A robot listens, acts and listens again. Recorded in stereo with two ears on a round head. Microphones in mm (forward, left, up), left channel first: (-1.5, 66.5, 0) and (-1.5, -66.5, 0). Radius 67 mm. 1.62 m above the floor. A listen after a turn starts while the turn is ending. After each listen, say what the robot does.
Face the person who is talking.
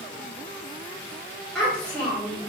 Turn 30° left.
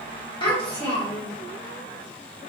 Turn 145° left.
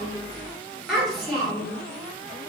Facing the child speaking, 1 to 2 m away.